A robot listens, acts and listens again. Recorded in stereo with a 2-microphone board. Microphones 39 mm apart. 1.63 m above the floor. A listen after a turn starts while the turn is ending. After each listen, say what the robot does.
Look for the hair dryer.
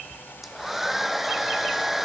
Turn 30° right.
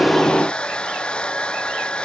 Turn 25° left.
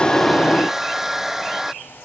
Turn 10° right.
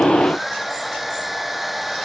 Found it: a hair dryer, straight ahead.